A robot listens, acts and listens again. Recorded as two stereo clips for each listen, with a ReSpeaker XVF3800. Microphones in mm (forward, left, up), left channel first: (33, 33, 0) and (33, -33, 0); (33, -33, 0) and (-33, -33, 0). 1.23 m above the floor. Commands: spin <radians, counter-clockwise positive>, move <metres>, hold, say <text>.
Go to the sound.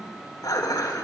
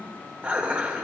spin 1.92
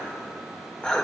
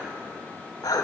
spin 0.26
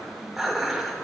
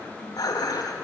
move 1.0
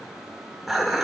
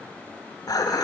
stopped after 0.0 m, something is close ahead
say Blocked. The dishes clattering is further on, straight ahead.